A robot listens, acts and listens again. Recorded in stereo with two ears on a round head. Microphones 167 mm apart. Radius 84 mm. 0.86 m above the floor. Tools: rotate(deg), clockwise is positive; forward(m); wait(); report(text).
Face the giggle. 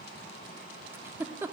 rotate(30)
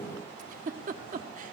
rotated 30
rotate(135)
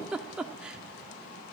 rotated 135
report("Facing the giggle, under 1 m away.")